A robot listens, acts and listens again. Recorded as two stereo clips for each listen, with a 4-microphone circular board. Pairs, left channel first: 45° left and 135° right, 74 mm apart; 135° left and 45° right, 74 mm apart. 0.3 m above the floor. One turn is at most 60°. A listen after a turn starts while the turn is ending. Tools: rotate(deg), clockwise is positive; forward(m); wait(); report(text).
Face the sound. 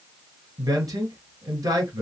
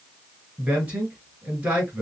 rotate(60)
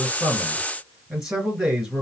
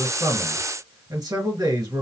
rotate(50)
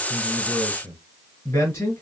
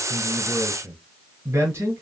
report("Found it: a man speaking, straight ahead, 2 to 4 m away.")